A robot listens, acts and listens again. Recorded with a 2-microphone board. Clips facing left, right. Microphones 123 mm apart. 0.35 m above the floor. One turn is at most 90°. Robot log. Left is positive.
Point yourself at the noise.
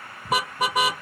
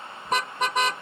cmd yaw +30
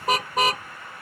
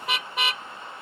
note: So it is at 140° left.
cmd yaw +90
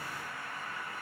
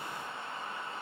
note: Nothing new. It was at 50° left.
cmd yaw +50
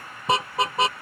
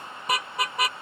note: The car horn is now 25° left.
cmd yaw +25
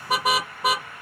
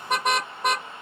end: Facing the car horn.